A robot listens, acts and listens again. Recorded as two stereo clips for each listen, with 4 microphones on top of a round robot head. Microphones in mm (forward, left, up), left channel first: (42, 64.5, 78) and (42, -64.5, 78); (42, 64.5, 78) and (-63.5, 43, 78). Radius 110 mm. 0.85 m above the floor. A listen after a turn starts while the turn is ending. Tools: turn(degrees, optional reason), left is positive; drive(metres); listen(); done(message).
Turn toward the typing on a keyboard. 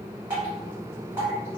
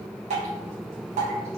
listen()
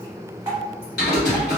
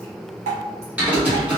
turn(degrees=115, reason="The typing on a keyboard: 115° left.")
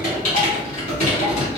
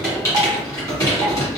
turn(degrees=65, reason="The typing on a keyboard is now 65° left.")
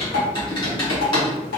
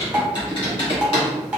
turn(degrees=40, reason="The typing on a keyboard is now 40° left.")
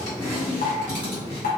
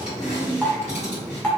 turn(degrees=15, reason="The typing on a keyboard is now 15° left.")
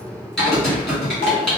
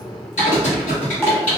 done("Facing the typing on a keyboard, 1 to 2 m away.")